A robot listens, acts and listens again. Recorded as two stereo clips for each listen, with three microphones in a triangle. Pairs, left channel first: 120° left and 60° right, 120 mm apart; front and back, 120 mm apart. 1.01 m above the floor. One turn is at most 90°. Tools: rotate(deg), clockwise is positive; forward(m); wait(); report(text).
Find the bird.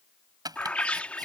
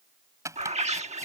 rotate(90)
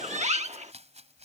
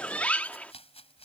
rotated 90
rotate(80)
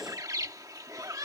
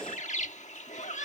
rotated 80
report("Facing the bird.")